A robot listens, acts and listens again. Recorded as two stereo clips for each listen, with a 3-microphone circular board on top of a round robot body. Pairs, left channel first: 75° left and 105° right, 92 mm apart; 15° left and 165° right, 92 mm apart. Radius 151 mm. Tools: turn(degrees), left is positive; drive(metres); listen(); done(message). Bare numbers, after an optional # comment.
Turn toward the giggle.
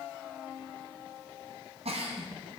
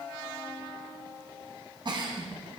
# The giggle: 120° right.
turn(-120)
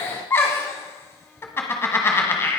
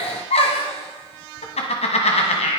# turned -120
# The giggle is now 10° left.
turn(10)
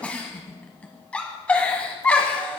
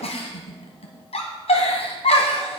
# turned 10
done("Facing the giggle, 1 to 2 m away.")